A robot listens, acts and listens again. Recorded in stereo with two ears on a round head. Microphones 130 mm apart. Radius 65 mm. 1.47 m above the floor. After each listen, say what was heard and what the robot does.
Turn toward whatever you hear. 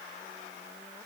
Keep listening.
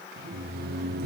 Turn 90° right.
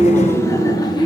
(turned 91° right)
So it is at 30° left. Turn 30° left.
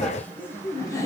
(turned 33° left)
The laughter is now 25° left. Turn 25° left.
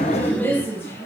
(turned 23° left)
The laughter is now 20° left. Turn 20° left.
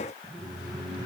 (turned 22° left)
Found it: laughter, straight ahead, 2 to 4 m away.